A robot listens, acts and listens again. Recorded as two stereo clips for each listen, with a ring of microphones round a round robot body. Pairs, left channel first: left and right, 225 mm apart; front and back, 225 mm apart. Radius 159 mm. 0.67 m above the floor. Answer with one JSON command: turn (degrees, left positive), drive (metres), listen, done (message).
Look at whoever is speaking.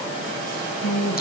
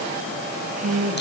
{"turn": 125}
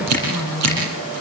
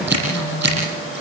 {"turn": -15}
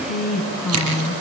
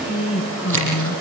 {"done": "Facing the woman speaking."}